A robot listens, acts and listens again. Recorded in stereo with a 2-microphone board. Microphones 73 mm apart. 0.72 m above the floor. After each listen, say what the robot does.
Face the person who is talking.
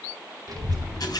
Turn 70° right.
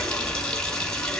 Facing the child speaking, 2 to 4 m away.